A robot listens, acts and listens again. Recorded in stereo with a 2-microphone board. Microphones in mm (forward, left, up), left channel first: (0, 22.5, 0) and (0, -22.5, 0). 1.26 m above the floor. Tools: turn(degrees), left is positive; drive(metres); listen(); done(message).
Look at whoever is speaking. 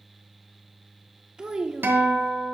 turn(degrees=-20)
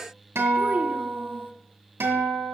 listen()
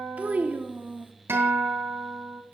turn(degrees=-140)
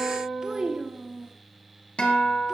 turn(degrees=-15)
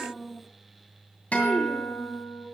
done("Facing the child speaking.")